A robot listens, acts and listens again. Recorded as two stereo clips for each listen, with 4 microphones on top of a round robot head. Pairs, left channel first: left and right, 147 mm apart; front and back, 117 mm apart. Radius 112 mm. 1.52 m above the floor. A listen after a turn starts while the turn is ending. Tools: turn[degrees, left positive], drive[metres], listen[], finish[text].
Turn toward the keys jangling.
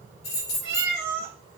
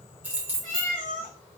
Thought: The keys jangling: 105° left.
Action: turn[105]
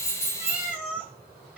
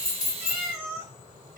Action: listen[]
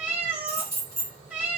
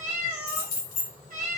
Thought: The keys jangling is now 10° left.
Action: turn[10]
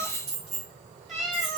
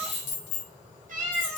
Action: finish[Facing the keys jangling.]